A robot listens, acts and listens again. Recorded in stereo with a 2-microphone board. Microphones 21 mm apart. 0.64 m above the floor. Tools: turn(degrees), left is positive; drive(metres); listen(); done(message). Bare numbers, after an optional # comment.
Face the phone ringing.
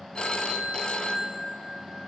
# The phone ringing: about 45° left or 135° left.
turn(45)
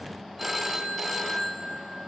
done("Found it: a phone ringing, straight ahead.")